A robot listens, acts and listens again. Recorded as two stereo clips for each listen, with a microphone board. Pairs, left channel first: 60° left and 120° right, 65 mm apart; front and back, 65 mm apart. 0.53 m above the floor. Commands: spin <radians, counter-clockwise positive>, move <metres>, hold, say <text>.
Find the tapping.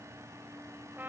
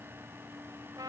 hold
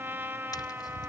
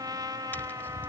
spin 1.05
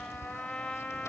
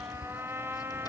spin 0.26
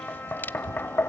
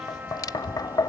say Found it: tapping, straight ahead, under 1 m away.